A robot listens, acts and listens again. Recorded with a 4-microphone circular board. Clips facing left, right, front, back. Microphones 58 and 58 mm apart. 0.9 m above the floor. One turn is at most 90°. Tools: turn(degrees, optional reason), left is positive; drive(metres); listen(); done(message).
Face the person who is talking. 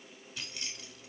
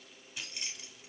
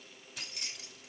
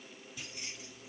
listen()
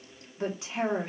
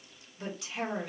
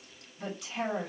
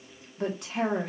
turn(degrees=90, reason="The woman speaking: 150° left.")
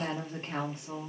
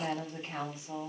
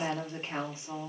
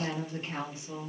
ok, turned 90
turn(degrees=60, reason="The woman speaking is now 60° left.")
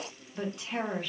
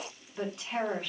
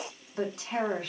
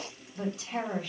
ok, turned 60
done("Facing the woman speaking, 2 to 4 m away.")